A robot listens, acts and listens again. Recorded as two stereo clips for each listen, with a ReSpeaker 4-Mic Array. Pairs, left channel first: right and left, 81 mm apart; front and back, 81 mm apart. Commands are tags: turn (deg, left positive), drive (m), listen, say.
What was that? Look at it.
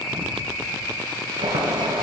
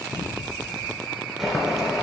<turn deg="95"/>
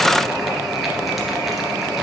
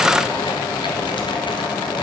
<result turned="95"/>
<say>Facing the boiling.</say>